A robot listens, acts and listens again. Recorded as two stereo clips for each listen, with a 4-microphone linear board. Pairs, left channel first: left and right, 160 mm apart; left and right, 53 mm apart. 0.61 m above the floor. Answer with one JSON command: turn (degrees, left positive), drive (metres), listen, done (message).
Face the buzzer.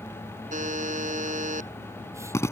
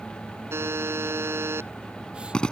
{"turn": -55}
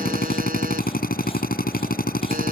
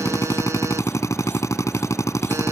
{"listen": true}
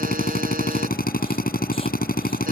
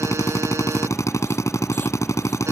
{"listen": true}
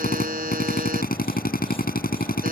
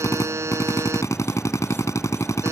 {"turn": -70}
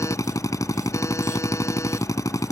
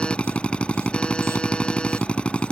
{"listen": true}
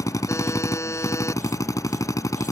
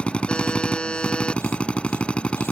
{"turn": 20}
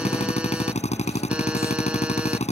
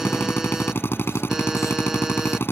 {"listen": true}
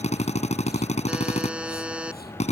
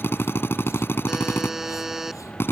{"done": "Found it: a buzzer, straight ahead."}